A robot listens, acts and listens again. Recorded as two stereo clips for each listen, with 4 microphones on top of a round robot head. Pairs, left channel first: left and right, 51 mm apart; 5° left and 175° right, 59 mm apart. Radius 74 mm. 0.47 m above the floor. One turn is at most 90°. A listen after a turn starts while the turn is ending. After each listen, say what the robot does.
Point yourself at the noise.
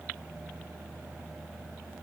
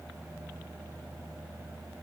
Keep listening.
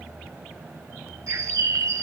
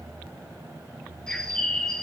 Turn 70° right.
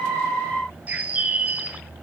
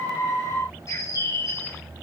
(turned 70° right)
Turn 30° right.
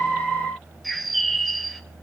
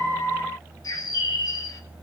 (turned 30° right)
Found it: a bird, straight ahead, 2 to 4 m away.